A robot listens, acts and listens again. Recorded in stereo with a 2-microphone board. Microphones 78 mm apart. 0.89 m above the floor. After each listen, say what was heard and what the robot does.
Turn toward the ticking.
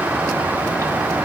Keep listening.
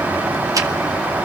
Keep listening.
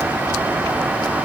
I can't make out ticking to turn to.